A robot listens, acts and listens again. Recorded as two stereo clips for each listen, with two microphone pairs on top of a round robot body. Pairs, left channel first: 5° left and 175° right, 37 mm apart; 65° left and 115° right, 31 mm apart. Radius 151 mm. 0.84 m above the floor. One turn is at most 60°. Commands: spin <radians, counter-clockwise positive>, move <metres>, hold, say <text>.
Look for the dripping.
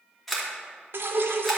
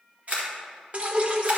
spin -1.05
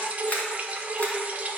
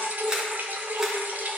spin -1.05
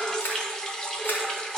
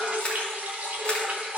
spin -1.05
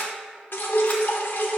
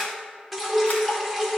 spin -0.35
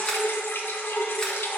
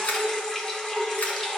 say Facing the dripping.